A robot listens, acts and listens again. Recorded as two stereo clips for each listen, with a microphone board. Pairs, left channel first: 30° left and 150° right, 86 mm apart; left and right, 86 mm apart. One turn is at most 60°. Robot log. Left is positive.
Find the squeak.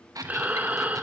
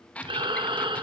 note: The squeak: 165° left.
cmd yaw +60
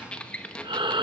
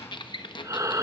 note: The squeak is now 105° left.
cmd yaw +60
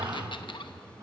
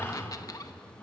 note: The squeak is now 45° left.
cmd yaw +45
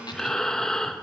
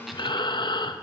cmd idle
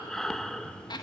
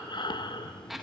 end: Facing the squeak.